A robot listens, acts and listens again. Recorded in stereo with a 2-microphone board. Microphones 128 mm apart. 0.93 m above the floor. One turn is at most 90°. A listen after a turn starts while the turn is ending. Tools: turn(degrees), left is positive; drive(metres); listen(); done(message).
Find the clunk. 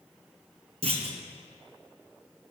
turn(degrees=-60)
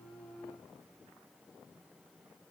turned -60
listen()
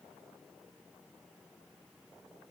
done("I heard a clunk, but can't make it out now. It was about straight ahead or 60° right.")